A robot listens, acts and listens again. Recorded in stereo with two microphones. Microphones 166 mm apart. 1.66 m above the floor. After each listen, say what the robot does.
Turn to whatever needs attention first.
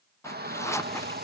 Turn 75° right.
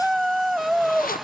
Facing the shout.